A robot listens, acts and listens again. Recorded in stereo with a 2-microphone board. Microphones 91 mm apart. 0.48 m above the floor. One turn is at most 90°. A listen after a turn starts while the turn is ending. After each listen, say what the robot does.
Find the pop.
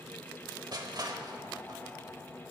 Keep listening.
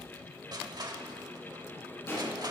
Turn 25° left.
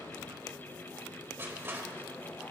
Keep listening.
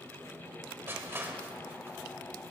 I heard a pop, but can't make it out now. It was about straight ahead or 130° left.